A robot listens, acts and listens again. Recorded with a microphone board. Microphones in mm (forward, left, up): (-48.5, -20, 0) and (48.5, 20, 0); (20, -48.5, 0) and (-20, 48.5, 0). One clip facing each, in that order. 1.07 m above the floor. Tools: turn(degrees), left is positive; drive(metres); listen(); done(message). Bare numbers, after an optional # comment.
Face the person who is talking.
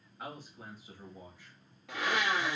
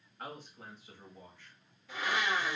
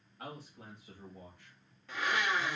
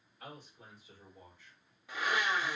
# The man speaking: 80° right.
turn(-80)
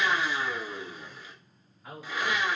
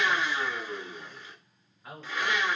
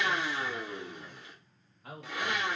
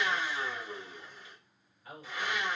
# The man speaking is now 70° right.
turn(-70)
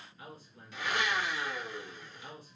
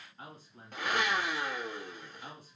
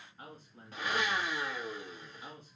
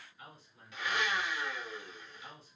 # The man speaking is now 20° right.
turn(-20)
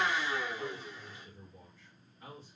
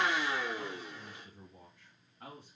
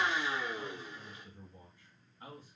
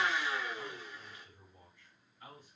done("Found it: a man speaking, straight ahead, 1 to 2 m away.")